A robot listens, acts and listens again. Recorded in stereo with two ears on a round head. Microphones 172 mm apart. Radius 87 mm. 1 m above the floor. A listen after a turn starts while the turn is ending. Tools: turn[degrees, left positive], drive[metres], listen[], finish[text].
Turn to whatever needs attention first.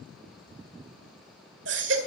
Thought: The baby crying: about 65° right or 115° right.
Action: turn[-65]
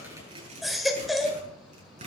Action: finish[Found it: a baby crying, straight ahead.]